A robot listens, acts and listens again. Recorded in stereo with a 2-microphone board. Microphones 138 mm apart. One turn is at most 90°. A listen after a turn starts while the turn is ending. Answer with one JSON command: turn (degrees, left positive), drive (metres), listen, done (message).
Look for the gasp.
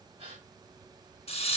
{"turn": -40}
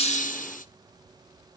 {"listen": true}
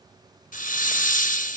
{"done": "I heard a gasp, but can't make it out now. It was about straight ahead or 100° right."}